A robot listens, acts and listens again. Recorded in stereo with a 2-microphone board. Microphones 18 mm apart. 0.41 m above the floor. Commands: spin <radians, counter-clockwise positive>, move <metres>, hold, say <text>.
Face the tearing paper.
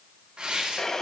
spin -1.05
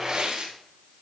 spin -0.96
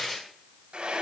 spin 0.35
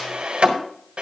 hold
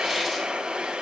hold
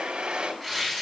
say Found it: tearing paper, straight ahead, 2 to 4 m away.